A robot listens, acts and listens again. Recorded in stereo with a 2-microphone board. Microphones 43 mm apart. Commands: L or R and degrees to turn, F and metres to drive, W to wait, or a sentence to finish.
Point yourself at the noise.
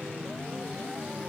W
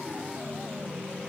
W
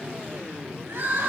R70
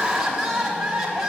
R10
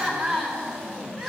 Found it: crying, straight ahead.